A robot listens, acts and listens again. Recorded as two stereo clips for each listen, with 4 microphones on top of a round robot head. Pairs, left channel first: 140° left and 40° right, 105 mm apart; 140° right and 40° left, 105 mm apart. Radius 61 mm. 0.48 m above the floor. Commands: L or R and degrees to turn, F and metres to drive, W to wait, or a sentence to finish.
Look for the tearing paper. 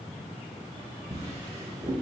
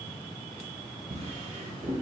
W
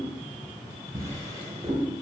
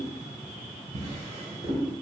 W
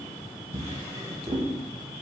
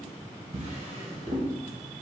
I can't make out tearing paper, only a drawer.